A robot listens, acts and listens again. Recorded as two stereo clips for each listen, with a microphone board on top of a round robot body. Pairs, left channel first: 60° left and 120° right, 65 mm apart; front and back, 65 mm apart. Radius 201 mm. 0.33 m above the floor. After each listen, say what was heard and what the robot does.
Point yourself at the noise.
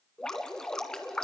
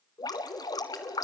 The dripping: 20° right. Turn 20° right.
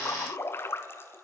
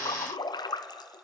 Facing the dripping, 1 to 2 m away.